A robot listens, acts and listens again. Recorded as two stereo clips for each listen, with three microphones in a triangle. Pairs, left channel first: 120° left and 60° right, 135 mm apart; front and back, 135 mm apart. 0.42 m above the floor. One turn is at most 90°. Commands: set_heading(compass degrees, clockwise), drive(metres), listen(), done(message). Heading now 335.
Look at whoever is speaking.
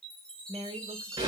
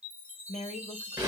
set_heading(355)
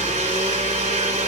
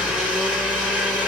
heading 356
listen()
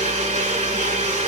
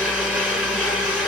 listen()
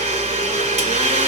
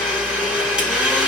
done("Facing where the woman speaking came from. I can't hear it now.")